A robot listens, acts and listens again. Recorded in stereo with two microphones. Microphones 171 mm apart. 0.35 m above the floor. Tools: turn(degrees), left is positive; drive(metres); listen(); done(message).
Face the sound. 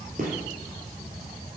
turn(degrees=-50)
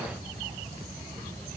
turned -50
listen()
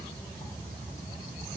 done("I heard a gunshot, but can't make it out now. It was about straight ahead or 80° right.")